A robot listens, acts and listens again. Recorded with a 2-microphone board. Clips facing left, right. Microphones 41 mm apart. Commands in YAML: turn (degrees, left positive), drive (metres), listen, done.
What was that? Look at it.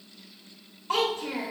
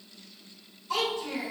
turn: 55
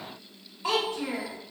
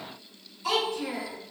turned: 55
turn: 30
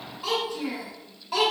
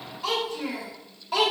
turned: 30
done: "Facing the child speaking, 1 to 2 m away."